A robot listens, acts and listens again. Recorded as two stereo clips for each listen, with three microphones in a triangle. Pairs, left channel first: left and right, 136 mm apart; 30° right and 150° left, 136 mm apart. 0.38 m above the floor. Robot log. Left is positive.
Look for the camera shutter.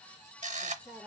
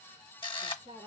note: The camera shutter: 75° right.
cmd yaw -75
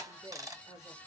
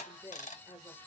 cmd idle
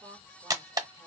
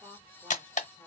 note: The camera shutter is now 30° right.
cmd yaw -30
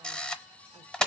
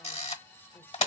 end: Facing the camera shutter, under 1 m away.